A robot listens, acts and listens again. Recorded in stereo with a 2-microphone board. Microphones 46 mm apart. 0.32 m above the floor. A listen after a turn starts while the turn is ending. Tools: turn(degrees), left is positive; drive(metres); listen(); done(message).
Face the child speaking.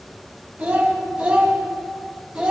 turn(degrees=-20)
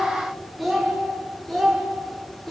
turn(degrees=10)
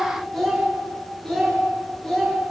turn(degrees=10)
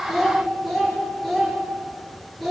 done("Facing the child speaking, over 4 m away.")